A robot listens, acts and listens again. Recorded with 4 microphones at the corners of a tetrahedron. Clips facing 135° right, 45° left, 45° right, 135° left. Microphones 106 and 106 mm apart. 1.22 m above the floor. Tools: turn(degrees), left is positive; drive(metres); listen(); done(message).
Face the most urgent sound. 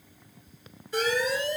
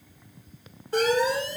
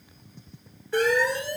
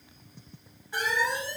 turn(degrees=-10)
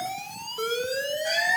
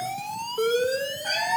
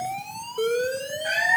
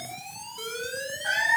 done("Facing the alarm.")